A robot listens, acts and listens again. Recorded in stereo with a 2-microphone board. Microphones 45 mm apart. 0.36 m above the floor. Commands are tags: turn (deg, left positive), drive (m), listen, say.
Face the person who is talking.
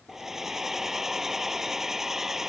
<listen/>
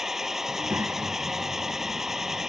<turn deg="-60"/>
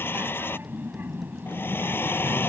<turn deg="-55"/>
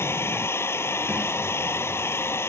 <listen/>
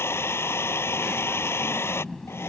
<turn deg="10"/>
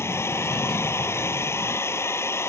<say>Facing the child speaking.</say>